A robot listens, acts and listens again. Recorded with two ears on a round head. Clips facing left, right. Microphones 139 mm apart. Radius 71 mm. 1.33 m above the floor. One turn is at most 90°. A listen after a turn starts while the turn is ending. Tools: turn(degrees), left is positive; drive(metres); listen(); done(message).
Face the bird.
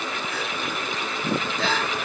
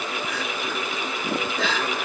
listen()
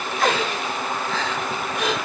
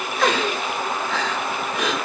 listen()
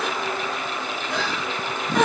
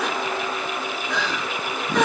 done("I can't make out a bird, only crying.")